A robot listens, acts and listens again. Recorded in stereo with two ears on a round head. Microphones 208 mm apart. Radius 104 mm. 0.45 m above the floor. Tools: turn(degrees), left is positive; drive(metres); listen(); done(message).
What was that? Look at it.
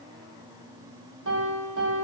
turn(degrees=-55)
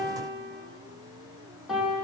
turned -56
done("Found it: a piano, straight ahead.")